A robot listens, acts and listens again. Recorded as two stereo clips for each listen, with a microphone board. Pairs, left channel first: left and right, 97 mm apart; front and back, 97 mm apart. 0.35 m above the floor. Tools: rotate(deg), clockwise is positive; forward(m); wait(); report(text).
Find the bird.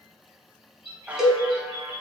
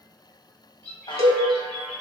rotate(-75)
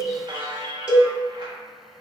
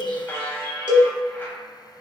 wait()
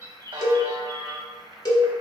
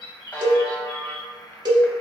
rotate(-30)
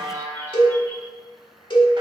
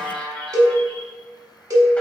wait()
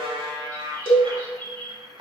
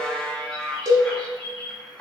rotate(-20)
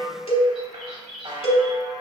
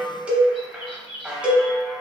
report("Found it: a bird, straight ahead, 2 to 4 m away.")